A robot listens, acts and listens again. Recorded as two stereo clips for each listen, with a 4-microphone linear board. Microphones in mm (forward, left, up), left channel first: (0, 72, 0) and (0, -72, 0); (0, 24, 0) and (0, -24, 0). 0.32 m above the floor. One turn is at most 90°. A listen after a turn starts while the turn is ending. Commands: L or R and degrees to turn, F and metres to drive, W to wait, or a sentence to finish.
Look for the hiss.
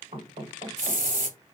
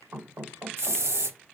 R65
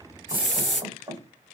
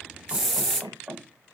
Found it: a hiss, straight ahead.